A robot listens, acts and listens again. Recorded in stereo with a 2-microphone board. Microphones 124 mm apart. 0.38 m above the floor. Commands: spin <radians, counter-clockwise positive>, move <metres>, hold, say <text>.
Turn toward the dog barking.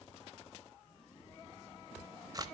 hold
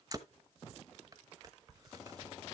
hold
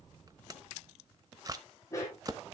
spin 0.44
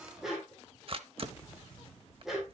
say Found it: a dog barking, straight ahead.